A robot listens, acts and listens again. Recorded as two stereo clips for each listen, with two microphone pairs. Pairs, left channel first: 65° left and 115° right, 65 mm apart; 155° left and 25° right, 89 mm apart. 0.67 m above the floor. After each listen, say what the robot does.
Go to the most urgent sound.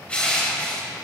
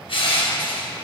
Keep listening.
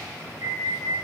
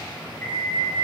Turn 140° right.
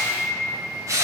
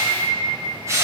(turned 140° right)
Drive 1.0 m forward.
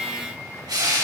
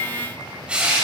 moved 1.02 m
Keep listening.
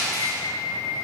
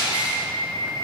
Turn 10° left.
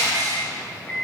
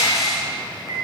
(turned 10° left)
Drive 1.0 m forward.
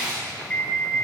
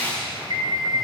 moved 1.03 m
Drive 1.0 m forward.
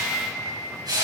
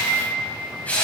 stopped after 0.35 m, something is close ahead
Arrived at the alarm, straight ahead.